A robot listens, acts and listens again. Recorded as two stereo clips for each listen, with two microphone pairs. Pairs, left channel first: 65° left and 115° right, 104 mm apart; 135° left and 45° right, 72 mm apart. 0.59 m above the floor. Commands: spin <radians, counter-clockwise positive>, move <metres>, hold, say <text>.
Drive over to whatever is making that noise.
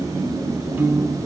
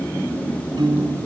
spin -0.70
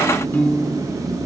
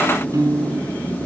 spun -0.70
move 1.0
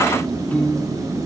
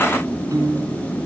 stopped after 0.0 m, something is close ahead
say Something is in my way. I am facing the piano but have not reached it.